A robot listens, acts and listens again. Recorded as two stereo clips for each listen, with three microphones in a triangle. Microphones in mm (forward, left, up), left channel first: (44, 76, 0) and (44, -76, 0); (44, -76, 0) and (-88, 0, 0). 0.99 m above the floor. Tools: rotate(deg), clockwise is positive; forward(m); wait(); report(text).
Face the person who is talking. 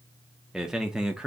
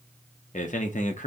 report("Found it: a man speaking, straight ahead, under 1 m away.")